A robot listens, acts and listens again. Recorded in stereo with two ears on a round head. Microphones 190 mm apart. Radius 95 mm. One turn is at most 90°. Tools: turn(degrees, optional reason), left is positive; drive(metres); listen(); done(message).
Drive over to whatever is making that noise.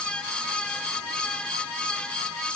listen()
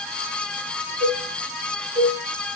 turn(degrees=-30, reason="The cowbell: about 30° right or 150° right.")
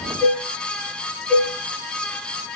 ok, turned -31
drive(metres=1.0)
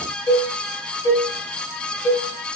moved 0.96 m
turn(degrees=15, reason="The cowbell is now 15° left.")
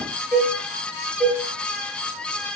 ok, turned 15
drive(metres=1.0)
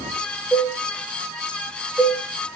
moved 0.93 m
drive(metres=1.0)
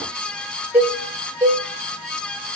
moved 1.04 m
turn(degrees=-10, reason="The cowbell is now 10° right.")
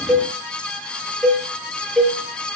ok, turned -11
drive(metres=1.0)
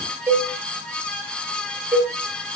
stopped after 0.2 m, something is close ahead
turn(degrees=-10, reason="The cowbell is now 10° right.")
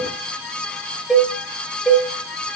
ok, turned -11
done("Arrived at the cowbell, straight ahead.")